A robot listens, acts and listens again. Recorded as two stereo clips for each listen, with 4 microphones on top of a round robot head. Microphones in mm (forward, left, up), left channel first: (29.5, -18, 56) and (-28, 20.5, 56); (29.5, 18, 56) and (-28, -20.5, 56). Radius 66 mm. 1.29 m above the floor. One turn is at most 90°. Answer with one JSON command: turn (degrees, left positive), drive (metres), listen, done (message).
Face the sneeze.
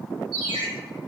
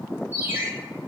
{"listen": true}
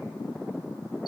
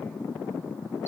{"listen": true}
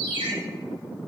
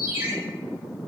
{"done": "I can't make out a sneeze, only a ringtone."}